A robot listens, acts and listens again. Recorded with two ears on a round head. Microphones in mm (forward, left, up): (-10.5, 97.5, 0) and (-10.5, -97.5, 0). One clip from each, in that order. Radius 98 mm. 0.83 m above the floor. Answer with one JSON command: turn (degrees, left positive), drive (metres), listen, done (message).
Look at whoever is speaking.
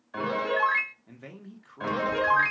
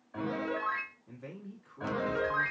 {"turn": 30}
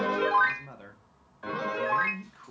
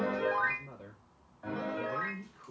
{"turn": 115}
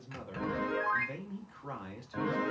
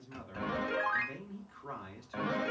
{"done": "Found it: a man speaking, straight ahead."}